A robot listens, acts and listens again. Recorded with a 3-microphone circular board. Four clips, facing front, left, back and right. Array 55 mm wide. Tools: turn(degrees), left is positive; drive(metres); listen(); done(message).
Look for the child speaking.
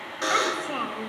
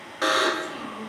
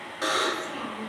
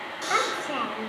turn(degrees=-45)
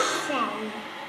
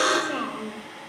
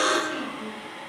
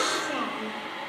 done("Found it: a child speaking, straight ahead.")